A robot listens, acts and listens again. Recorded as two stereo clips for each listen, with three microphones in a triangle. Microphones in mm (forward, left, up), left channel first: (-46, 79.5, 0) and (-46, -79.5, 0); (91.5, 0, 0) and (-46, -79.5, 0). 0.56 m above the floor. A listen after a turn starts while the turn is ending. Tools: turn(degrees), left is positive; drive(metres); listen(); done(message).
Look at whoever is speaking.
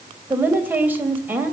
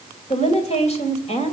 turn(degrees=-15)
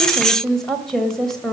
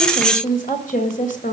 done("Found it: a woman speaking, straight ahead, 2 to 4 m away.")